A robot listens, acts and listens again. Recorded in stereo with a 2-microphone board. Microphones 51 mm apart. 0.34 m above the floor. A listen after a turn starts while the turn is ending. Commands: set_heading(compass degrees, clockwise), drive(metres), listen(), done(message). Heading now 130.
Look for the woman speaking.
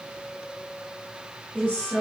set_heading(160)
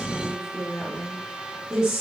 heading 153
set_heading(168)
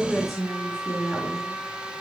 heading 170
done("Facing the woman speaking.")